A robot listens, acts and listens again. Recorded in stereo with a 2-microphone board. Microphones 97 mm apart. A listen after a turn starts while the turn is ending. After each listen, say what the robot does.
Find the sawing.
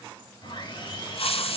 Turn 55° left.
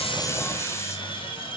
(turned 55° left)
Turn 65° left.
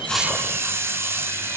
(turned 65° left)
Keep listening.
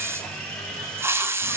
Turn 10° left.
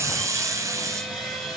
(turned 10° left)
Found it: sawing, straight ahead, 2 to 4 m away.